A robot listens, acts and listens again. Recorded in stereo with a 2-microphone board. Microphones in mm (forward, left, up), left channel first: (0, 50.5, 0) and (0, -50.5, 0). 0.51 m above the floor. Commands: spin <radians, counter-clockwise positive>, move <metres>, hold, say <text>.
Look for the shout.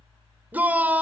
spin -0.26
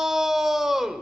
say Found it: a shout, straight ahead, 2 to 4 m away.